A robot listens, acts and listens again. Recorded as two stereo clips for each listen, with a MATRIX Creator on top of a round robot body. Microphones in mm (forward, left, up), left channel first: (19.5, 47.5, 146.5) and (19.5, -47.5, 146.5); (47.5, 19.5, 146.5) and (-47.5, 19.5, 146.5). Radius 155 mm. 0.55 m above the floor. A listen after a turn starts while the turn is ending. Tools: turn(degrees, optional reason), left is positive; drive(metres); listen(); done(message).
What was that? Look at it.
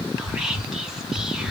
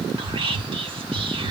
turn(degrees=-175, reason="The whispering: 175° right.")
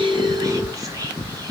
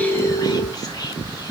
turn(degrees=-40, reason="The whispering is now 40° right.")
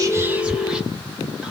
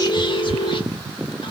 turn(degrees=-10, reason="The whispering is now 10° right.")
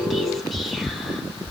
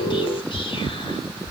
done("Facing the whispering, 1 to 2 m away.")